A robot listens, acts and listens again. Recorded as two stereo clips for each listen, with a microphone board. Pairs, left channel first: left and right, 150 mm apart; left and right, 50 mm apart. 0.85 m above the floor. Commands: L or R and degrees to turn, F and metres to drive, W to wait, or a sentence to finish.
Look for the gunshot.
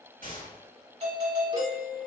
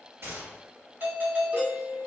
R70
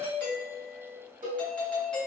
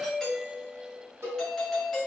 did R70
W
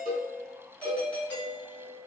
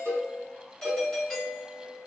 I heard a gunshot, but can't make it out now. It was about straight ahead or 40° right.